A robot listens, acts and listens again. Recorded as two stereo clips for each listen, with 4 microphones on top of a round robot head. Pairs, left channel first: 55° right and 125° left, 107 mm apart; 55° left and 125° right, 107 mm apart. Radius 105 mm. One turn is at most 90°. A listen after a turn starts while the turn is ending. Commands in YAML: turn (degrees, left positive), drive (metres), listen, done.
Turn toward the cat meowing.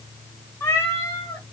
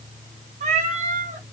turn: -90
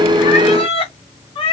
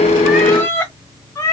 turn: -10
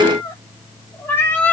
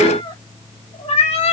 turn: 25
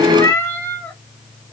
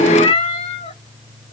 turn: 20
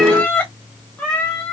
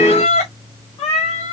turn: 25
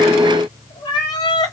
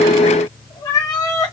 done: "Found it: a cat meowing, straight ahead, 1 to 2 m away."